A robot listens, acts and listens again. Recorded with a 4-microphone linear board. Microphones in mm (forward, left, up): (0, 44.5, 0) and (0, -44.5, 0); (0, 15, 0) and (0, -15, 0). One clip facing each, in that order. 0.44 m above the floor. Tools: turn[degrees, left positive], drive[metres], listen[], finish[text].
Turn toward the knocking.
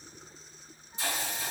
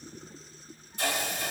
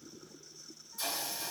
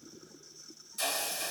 Action: listen[]
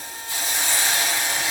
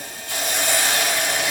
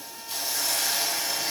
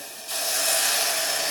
Action: listen[]
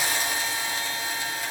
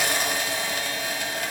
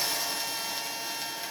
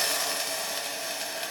Action: finish[I can't make out knocking, only a hiss.]